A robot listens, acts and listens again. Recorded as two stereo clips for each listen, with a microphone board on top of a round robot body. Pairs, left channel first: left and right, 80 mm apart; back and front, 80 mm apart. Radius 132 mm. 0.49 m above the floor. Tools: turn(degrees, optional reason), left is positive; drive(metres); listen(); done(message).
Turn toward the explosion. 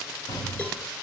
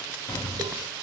turn(degrees=125, reason="The explosion: 125° left.")
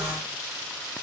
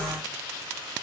done("I heard an explosion from this way, but can't make it out now.")